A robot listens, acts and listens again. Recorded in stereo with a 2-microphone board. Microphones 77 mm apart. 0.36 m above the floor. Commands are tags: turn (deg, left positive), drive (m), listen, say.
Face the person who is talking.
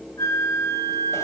<listen/>
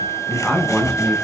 <turn deg="30"/>
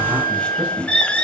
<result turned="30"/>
<turn deg="-20"/>
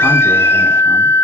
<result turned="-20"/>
<listen/>
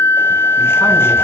<listen/>
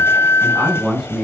<say>Facing the man speaking.</say>